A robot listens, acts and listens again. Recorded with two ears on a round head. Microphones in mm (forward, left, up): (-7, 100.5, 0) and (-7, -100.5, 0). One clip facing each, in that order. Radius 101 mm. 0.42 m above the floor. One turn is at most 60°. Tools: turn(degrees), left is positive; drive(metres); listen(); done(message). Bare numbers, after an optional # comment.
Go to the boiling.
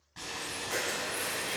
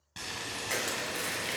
# The boiling: about 50° right or 130° right.
turn(-50)
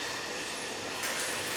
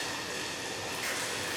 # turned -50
# So it is at 80° right.
turn(-60)
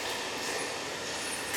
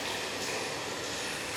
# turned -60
# The boiling is now 35° right.
turn(-35)
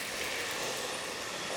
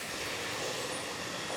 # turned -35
# The boiling is now 10° left.
turn(10)
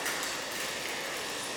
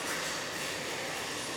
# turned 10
drive(1.0)
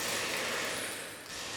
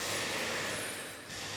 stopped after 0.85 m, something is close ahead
done("I am next to the boiling.")